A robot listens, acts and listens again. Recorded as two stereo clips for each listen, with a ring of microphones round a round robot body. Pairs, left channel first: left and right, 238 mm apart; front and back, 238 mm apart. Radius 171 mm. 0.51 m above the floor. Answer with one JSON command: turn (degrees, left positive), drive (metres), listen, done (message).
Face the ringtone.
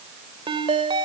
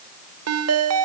{"turn": -165}
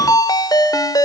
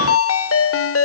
{"turn": 15}
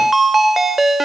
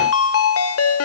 {"done": "Facing the ringtone, 1 to 2 m away."}